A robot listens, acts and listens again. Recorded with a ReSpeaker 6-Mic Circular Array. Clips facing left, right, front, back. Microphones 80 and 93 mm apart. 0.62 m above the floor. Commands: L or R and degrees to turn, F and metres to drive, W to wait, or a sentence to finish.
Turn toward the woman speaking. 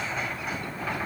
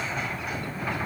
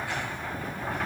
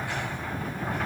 W
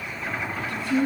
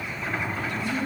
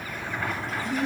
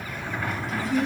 L90
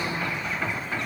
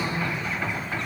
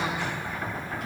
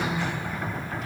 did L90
Found it: a woman speaking, straight ahead, over 4 m away.